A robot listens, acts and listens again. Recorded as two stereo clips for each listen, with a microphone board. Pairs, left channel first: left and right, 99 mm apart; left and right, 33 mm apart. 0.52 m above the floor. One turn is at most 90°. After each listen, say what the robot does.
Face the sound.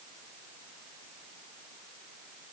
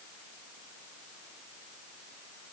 Keep listening.
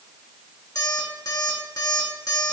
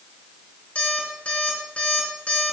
Turn 40° left.
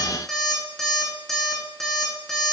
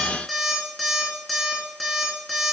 Facing the alarm clock, 2 to 4 m away.